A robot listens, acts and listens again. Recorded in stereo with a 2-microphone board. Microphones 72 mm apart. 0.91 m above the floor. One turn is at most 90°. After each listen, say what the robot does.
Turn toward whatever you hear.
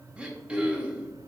Turn 15° right.
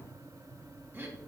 Keep listening.
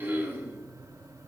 Turn 90° right.
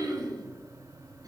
Turn 70° right.
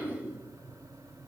Turn 20° right.
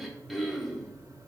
Facing the throat clearing, under 1 m away.